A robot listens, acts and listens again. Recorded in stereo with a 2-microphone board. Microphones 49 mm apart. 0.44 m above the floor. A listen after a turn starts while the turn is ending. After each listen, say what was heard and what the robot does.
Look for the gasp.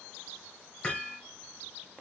Keep listening.
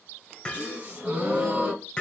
The gasp: about 25° right or 155° right. Turn 25° right.
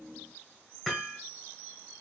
Keep listening.
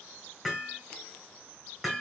I heard a gasp, but can't make it out now. It was about straight ahead or 130° right.